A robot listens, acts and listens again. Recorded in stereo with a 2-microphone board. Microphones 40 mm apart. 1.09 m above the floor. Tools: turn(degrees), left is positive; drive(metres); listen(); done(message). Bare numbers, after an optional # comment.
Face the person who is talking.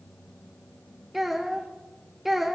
turn(-30)
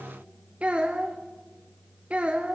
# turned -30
# So it is at 145° right.
turn(-145)
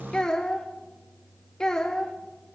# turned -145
# The child speaking is now 20° left.
turn(20)
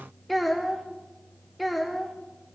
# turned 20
done("Facing the child speaking, under 1 m away.")